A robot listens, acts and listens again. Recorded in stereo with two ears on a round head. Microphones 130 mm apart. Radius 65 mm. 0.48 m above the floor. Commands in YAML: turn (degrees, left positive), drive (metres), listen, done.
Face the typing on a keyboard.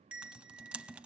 turn: -30
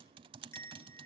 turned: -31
turn: -145
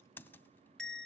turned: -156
turn: 15
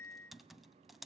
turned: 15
done: "Found it: typing on a keyboard, straight ahead."